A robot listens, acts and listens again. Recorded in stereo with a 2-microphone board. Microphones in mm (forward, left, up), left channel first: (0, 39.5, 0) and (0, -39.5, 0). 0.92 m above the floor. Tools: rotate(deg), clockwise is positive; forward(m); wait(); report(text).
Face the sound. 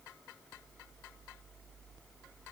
wait()
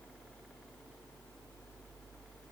wait()
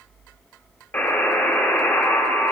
rotate(-25)
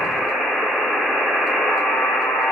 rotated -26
report("Found it: a buzzer, straight ahead, 1 to 2 m away.")